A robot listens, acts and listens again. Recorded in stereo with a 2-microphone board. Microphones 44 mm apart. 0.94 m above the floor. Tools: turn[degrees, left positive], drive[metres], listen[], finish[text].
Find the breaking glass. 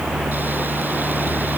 Action: listen[]
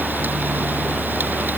Action: listen[]
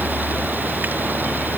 Action: finish[I can't make out breaking glass.]